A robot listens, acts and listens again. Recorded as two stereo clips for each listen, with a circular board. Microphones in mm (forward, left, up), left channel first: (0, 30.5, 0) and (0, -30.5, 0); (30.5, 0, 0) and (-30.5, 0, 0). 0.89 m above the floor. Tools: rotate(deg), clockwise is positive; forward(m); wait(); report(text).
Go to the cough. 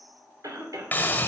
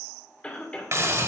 rotate(70)
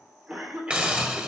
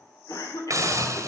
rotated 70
rotate(20)
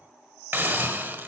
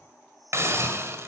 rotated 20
wait()
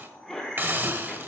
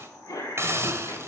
forward(1.0)
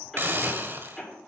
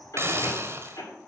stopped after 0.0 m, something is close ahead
report("Something is in my way. I am facing the cough but have not reached it.")